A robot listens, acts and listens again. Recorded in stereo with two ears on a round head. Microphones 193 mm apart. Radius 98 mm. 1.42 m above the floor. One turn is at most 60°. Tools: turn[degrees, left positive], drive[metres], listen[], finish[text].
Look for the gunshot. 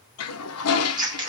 Action: listen[]
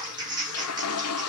Action: listen[]
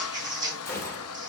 Action: turn[30]
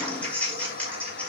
Action: listen[]
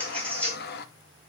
Action: finish[I heard a gunshot, but can't make it out now. It was about 15° right or 135° left.]